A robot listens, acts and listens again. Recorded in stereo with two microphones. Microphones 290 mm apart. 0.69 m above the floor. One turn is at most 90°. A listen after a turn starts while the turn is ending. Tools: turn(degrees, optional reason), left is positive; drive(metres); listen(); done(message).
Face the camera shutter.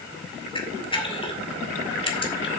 turn(degrees=20, reason="The camera shutter: about 20° left or 160° left.")
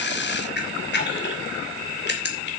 turn(degrees=90, reason="So it is at 140° left.")
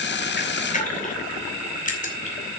turn(degrees=25, reason="The camera shutter is now 25° left.")
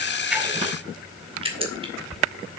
turn(degrees=-20, reason="The camera shutter is now 20° right.")
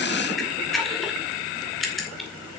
done("Facing the camera shutter, 2 to 4 m away.")